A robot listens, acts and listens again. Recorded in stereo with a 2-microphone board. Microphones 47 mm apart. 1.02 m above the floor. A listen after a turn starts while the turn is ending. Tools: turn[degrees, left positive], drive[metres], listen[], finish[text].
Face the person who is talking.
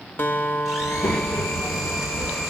Thought: The child speaking: about 70° left or 110° left.
Action: turn[70]
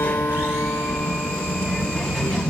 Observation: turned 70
Action: finish[Facing the child speaking.]